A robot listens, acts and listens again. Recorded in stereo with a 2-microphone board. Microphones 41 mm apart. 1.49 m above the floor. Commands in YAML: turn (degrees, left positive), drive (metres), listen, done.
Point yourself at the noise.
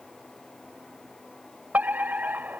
turn: -45
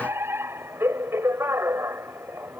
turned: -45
turn: -95
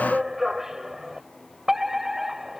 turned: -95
turn: -10
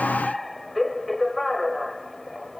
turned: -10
done: "Found it: a fire alarm, straight ahead."